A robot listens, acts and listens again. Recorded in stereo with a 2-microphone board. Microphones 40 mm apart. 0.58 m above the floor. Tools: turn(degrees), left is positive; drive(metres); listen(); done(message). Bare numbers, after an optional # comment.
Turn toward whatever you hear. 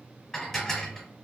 turn(30)
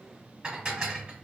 # So it is at 30° right.
turn(-30)
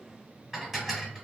# The dishes clattering is now 10° right.
turn(-10)
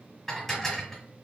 done("Found it: dishes clattering, straight ahead, 1 to 2 m away.")